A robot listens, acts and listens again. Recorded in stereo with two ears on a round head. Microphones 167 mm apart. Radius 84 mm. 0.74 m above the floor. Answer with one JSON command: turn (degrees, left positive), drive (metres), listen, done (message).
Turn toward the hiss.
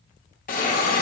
{"turn": 50}
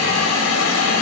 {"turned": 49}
{"turn": 85}
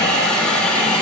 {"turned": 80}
{"done": "Found it: a hiss, straight ahead."}